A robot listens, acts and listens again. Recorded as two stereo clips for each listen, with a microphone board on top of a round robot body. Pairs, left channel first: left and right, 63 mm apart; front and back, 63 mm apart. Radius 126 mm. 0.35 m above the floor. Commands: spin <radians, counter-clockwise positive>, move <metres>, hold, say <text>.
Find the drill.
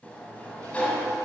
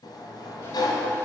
hold
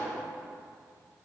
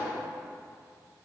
hold
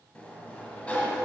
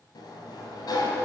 say I can't make out a drill, only a sliding door.